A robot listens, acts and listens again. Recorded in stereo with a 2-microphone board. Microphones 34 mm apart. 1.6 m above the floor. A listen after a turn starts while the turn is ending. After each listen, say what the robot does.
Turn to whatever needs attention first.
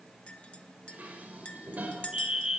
Turn 20° right.
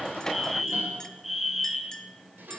Facing the fire alarm, 2 to 4 m away.